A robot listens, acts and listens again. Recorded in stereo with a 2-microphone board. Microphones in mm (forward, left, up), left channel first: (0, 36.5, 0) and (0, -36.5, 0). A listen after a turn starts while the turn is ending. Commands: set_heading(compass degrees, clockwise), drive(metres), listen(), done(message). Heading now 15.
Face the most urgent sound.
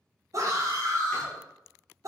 set_heading(60)
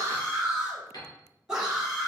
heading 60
set_heading(70)
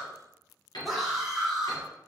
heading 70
done("Found it: a scream, straight ahead, 1 to 2 m away.")